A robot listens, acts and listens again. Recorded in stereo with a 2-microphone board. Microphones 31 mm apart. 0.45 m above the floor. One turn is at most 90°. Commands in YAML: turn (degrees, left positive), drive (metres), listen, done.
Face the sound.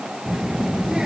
turn: -30
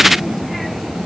done: "Found it: a child speaking, straight ahead."